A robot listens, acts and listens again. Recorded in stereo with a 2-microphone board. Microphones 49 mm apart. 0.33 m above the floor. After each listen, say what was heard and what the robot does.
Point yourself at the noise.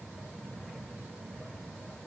Keep listening.
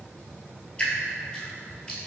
The dripping: about 20° left or 160° left. Turn 20° left.
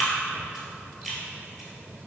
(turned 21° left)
Facing the dripping, 1 to 2 m away.